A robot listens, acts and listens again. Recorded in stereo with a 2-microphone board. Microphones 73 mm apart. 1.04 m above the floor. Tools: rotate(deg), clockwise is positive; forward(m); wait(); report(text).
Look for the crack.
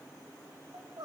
wait()
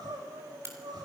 rotate(35)
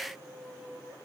wait()
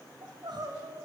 report("I heard a crack, but can't make it out now. It was about straight ahead or 110° right.")